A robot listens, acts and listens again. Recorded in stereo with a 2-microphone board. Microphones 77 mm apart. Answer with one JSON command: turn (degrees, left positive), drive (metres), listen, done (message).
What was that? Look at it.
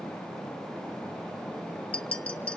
{"turn": 20}
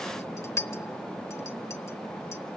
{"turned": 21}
{"turn": 140}
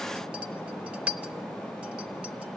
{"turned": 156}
{"turn": -15}
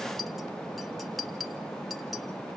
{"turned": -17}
{"done": "Found it: a clink, straight ahead."}